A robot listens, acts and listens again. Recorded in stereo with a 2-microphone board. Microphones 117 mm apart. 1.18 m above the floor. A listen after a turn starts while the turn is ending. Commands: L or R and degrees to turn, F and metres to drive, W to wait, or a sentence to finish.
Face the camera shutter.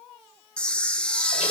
L30
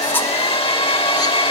W
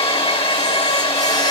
W
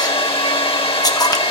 L140
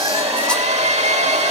W
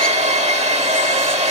W
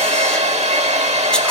I heard a camera shutter from this way, but can't make it out now.